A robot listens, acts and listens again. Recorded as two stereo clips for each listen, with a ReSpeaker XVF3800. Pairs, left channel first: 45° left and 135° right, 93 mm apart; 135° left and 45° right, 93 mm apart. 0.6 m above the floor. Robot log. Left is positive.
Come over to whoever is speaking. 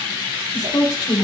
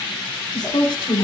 note: The woman speaking: 90° left.
cmd yaw +90
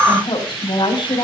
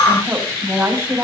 note: The woman speaking is now 15° left.
cmd yaw +15
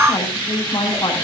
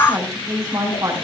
cmd fwd 1.0
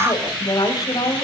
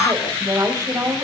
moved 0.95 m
cmd fwd 1.0
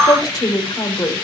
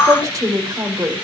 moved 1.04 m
cmd fwd 1.0
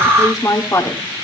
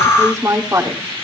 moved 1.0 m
cmd fwd 1.0
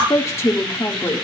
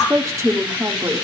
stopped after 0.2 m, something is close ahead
end: Arrived at the woman speaking, straight ahead.